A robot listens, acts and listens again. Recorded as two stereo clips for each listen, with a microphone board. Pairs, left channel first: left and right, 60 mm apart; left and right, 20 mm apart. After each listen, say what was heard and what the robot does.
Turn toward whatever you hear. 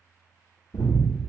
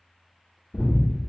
The breathing: about 70° left or 110° left. Turn 70° left.
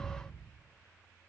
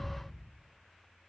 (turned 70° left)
Keep listening.
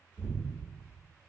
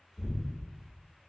So it is at 30° left. Turn 30° left.
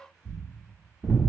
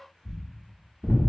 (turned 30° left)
Found it: breathing, straight ahead.